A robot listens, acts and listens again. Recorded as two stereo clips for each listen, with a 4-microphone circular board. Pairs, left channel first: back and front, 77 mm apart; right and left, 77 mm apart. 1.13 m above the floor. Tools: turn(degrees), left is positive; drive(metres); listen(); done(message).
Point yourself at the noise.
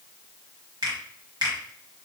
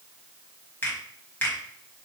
turn(degrees=-30)
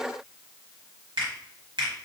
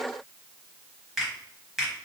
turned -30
done("Facing the finger snap, 1 to 2 m away.")